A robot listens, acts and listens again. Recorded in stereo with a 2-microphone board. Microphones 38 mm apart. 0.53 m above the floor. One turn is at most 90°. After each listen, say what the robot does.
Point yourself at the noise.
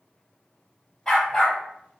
Turn 30° left.
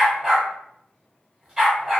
Turn 20° right.
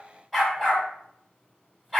Found it: a dog barking, straight ahead.